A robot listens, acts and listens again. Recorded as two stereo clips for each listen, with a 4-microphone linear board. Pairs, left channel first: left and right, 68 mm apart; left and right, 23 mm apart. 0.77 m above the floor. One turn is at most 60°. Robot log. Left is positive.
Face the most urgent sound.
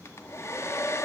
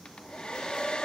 cmd idle
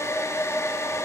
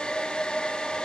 cmd idle
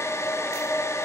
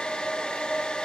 end: I can't make out anything urgent, only a hair dryer.